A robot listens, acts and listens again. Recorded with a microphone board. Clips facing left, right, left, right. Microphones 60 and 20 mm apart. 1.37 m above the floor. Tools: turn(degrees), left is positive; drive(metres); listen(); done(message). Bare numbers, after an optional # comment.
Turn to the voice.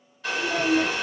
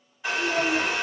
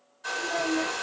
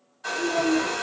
# The child speaking: about 20° right or 160° right.
turn(-20)
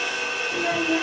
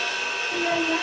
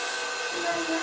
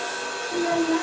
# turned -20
# So it is at 135° right.
turn(-135)
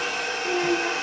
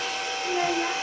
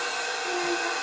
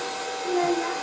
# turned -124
# The child speaking is now 10° right.
turn(-10)
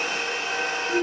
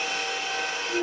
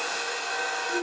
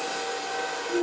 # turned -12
done("Found it: a child speaking, straight ahead, 1 to 2 m away.")